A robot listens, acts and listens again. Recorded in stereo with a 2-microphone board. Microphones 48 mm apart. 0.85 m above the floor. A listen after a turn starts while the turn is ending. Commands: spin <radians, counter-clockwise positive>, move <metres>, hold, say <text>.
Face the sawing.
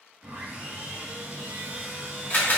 spin -0.87
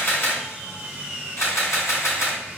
say Facing the sawing, 2 to 4 m away.